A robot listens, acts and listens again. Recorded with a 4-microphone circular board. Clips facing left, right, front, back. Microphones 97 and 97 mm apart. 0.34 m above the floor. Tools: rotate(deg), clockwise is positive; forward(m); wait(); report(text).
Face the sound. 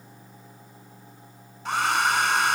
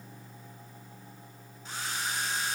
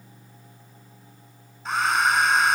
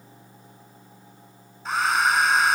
rotate(-90)
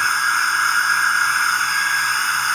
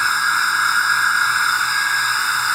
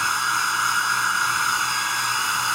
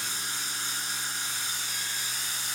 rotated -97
report("Facing the hair dryer.")